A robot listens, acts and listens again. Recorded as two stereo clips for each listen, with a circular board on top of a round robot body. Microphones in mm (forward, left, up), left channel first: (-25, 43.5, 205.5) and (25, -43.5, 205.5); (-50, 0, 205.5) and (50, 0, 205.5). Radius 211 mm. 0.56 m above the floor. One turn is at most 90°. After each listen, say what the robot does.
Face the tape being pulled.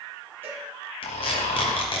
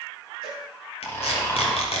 Turn 90° left.
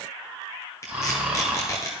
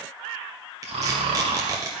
Turn 60° left.
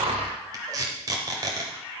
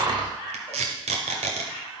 Found it: tape being pulled, straight ahead, under 1 m away.